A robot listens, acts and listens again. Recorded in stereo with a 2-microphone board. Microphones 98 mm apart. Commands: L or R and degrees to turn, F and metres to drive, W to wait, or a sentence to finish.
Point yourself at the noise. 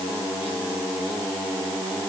W
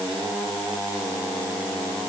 W
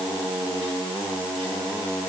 I can't make out anything to turn to.